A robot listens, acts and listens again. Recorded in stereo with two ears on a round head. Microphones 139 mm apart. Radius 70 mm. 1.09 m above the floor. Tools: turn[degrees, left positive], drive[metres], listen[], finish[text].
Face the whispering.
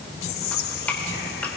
Thought: The whispering: about 65° left or 115° left.
Action: turn[65]
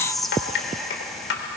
Action: finish[Found it: whispering, straight ahead, 1 to 2 m away.]